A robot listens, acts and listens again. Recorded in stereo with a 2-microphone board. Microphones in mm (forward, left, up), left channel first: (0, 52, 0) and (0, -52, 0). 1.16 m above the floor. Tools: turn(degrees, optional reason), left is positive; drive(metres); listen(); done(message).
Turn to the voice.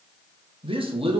turn(degrees=-60, reason="The man speaking: about 60° right or 120° right.")
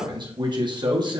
turn(degrees=-50, reason="So it is at 50° right.")
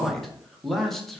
done("Facing the man speaking, under 1 m away.")